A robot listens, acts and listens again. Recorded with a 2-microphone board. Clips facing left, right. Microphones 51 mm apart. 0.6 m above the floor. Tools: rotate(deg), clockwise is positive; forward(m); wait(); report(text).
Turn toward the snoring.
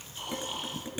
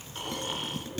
rotate(55)
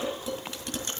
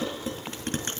rotate(70)
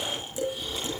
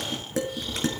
rotate(-10)
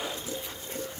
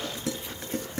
report("Found it: snoring, straight ahead.")